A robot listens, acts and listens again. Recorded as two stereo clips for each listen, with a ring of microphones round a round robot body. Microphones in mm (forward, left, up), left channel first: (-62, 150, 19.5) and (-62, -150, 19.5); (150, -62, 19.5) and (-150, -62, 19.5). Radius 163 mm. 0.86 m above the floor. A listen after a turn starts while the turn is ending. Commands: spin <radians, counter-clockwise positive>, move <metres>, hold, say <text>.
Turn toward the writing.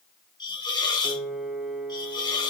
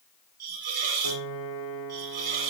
hold
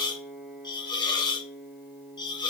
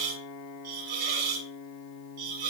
hold
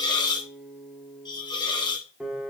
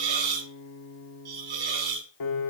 say I can't make out writing, only a hiss and a piano.